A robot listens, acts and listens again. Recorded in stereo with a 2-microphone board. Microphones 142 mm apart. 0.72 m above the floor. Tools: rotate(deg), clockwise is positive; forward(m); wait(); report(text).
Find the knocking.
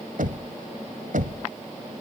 rotate(90)
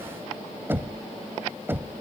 rotate(15)
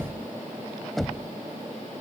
report("Found it: knocking, straight ahead.")